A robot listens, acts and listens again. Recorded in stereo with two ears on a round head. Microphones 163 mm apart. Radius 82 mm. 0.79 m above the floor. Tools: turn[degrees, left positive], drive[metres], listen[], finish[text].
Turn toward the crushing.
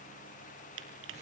Action: turn[-90]
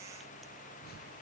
Action: listen[]
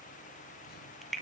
Action: finish[Facing the crushing, 2 to 4 m away.]